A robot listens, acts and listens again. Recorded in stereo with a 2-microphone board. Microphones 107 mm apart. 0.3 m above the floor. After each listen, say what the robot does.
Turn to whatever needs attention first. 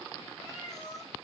Keep listening.
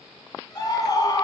Turn 40° left.
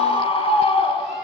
Turn 95° left.
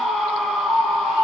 Found it: a scream, straight ahead.